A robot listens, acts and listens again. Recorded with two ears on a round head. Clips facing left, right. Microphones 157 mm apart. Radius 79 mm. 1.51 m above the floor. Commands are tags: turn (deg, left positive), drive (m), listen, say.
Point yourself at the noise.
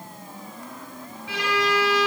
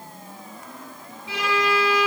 <turn deg="-20"/>
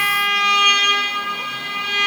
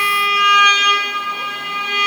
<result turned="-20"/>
<turn deg="-140"/>
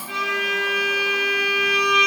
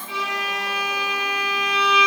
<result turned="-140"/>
<turn deg="-30"/>
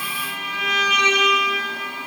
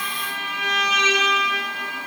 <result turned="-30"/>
<turn deg="15"/>
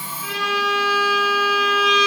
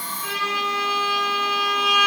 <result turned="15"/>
<say>Found it: a violin, straight ahead, over 4 m away.</say>